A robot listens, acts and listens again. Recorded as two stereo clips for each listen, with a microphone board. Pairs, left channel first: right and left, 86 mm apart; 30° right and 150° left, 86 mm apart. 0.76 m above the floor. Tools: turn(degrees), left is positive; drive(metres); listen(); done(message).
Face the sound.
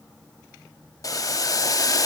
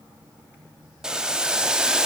turn(degrees=-130)
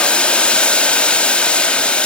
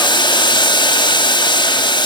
turn(degrees=-15)
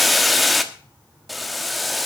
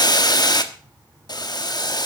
done("Facing the boiling.")